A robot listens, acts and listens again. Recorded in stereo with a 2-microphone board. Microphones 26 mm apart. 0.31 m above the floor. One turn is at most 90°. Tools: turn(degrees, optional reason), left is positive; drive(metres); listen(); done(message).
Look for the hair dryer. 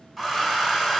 turn(degrees=-30)
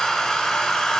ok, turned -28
turn(degrees=20, reason="So it is at 20° left.")
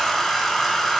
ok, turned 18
done("Found it: a hair dryer, straight ahead.")